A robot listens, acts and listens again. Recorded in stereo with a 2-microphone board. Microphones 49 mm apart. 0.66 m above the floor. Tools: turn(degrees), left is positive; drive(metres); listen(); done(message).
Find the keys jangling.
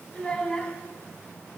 listen()
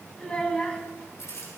turn(degrees=70)
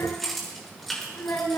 done("Found it: keys jangling, straight ahead, over 4 m away.")